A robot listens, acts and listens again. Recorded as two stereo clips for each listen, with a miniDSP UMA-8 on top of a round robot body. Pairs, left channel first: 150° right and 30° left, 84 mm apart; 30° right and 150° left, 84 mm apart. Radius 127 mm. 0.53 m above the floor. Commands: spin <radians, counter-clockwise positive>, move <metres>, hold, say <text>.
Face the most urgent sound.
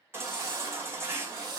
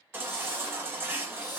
spin 1.57
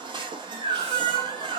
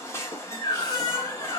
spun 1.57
spin 0.44
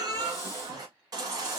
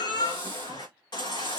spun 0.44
say Facing the baby crying.